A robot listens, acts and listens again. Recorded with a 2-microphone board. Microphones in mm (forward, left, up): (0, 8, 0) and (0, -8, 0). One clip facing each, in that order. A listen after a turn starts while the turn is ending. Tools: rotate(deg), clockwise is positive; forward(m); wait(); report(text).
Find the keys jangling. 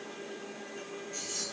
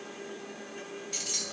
rotate(65)
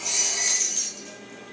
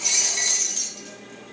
report("Found it: keys jangling, straight ahead, 1 to 2 m away.")